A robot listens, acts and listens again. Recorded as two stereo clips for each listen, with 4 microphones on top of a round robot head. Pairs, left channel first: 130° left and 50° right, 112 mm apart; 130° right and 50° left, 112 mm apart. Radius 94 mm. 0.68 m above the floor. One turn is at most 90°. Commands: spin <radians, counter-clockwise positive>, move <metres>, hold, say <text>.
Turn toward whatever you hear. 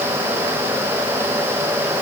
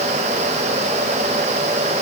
hold
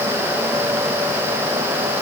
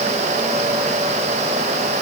hold
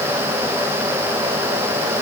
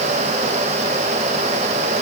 say I can't make out anything to turn to.